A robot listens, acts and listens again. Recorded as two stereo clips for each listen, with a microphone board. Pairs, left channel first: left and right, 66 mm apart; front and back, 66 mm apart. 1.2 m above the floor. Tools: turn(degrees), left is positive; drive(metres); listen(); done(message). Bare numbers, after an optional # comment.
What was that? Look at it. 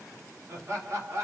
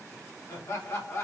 # The laughter: 45° right.
turn(-45)
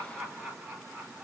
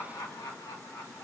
# The laughter is now 20° right.
turn(-20)
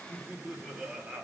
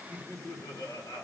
# The laughter is now 15° right.
turn(-15)
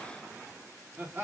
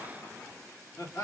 # The laughter is now 30° right.
turn(-30)
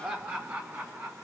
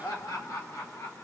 # The laughter is now 30° right.
turn(-30)
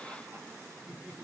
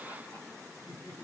# The laughter is now 25° right.
turn(-25)
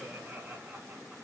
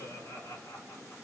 # The laughter is now 10° right.
turn(-10)
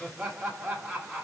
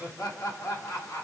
done("Found it: laughter, straight ahead, 1 to 2 m away.")